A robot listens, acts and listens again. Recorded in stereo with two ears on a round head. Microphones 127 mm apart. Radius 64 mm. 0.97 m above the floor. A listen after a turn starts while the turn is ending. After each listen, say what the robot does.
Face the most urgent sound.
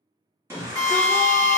Turn 20° right.
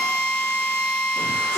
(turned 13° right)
Keep listening.
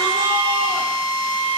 Keep listening.
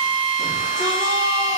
I heard a shout, but can't make it out now. It was about 5° right or 145° right.